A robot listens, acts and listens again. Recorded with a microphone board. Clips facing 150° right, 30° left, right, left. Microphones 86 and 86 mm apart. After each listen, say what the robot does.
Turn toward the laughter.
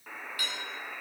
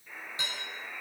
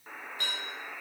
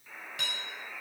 Keep listening.
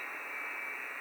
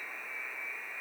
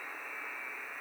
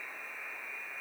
Keep listening.
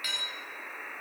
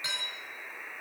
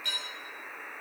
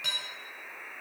I can't make out laughter, only dishes clattering and a buzzer.